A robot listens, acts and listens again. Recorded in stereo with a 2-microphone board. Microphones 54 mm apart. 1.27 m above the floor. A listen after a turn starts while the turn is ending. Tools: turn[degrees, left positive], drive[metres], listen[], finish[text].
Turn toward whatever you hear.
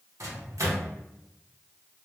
Thought: The microwave: about 65° right or 115° right.
Action: turn[-65]
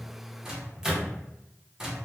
Thought: So it is at 10° right.
Action: turn[-10]
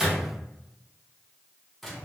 Action: finish[Facing the microwave.]